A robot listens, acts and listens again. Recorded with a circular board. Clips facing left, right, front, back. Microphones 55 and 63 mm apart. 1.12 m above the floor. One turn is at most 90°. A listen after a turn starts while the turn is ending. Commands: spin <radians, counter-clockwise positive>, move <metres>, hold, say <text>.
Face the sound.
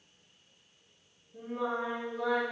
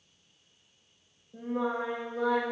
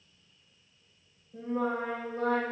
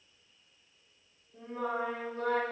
spin -0.96
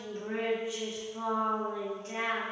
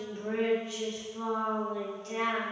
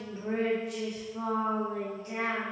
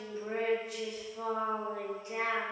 spin 0.52
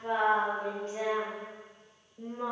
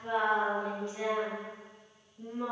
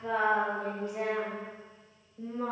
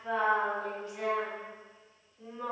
spin 0.79
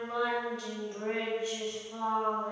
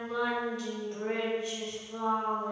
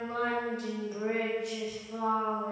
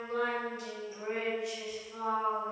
say Found it: singing, straight ahead.